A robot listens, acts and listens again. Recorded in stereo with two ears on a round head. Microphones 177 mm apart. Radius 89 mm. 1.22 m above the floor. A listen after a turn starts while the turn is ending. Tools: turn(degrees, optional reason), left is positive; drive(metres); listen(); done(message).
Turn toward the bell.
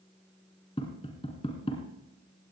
listen()
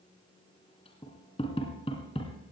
listen()
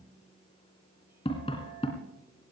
done("I can't make out a bell to turn to.")